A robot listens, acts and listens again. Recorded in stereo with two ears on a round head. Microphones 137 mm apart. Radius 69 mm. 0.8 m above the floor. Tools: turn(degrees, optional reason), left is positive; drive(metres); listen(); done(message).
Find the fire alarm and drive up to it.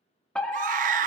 turn(degrees=30)
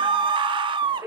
turn(degrees=-20, reason="So it is at 20° right.")
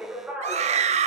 turn(degrees=-10, reason="The fire alarm is now 10° right.")
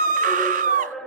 drive(metres=1.0)
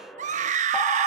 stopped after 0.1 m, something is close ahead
done("Something is in my way. I am facing the fire alarm but have not reached it.")